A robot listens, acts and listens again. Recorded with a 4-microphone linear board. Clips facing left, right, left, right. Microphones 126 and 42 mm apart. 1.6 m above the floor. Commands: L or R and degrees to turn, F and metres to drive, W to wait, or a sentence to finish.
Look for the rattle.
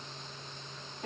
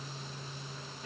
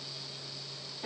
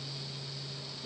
W
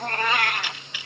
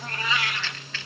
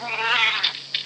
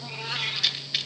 L30
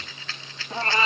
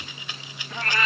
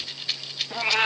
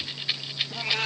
R15
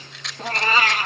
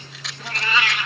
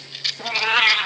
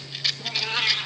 Found it: a rattle, straight ahead.